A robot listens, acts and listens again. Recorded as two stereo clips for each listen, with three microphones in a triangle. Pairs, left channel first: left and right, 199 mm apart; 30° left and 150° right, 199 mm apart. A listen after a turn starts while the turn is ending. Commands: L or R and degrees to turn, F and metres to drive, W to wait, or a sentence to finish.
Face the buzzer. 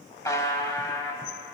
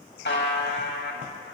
L15
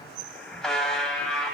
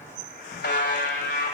Found it: a buzzer, straight ahead.